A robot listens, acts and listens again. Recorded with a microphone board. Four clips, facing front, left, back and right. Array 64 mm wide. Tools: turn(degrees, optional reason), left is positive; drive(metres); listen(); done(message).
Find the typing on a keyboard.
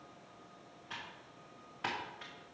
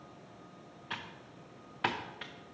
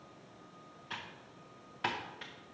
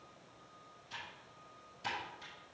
turn(degrees=100, reason="The typing on a keyboard: 100° left.")
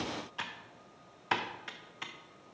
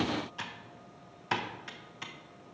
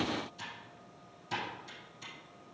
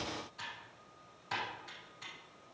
turn(degrees=30, reason="The typing on a keyboard is now 30° left.")
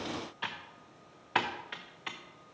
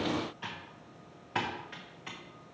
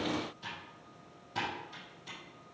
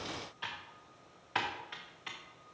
done("Found it: typing on a keyboard, straight ahead, under 1 m away.")